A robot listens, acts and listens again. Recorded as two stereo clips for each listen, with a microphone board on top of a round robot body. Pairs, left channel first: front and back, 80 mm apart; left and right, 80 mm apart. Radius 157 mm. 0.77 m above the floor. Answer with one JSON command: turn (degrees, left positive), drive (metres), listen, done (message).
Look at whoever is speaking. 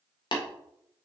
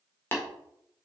{"listen": true}
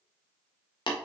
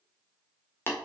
{"listen": true}
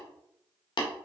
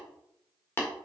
{"done": "I can't make out anyone speaking, only tapping."}